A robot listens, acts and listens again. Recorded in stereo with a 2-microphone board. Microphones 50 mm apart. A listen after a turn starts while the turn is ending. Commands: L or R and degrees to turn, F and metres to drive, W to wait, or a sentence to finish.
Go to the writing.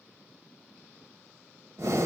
W
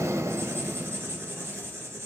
R50
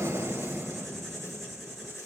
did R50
F1.0
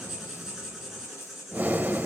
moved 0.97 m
R10
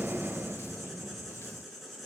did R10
F1.0
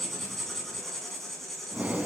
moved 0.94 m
F1.0
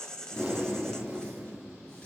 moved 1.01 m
L15
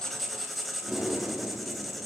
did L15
F1.0
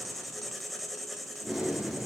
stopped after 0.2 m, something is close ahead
I am next to the writing.